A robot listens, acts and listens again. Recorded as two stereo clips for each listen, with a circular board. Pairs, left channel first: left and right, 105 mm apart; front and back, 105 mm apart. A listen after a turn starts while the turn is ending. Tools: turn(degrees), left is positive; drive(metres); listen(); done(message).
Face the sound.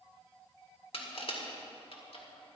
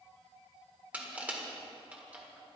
turn(degrees=105)
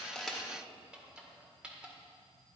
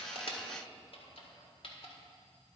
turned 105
turn(degrees=-10)
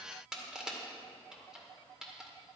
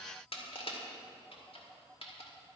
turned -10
done("Found it: crushing, straight ahead.")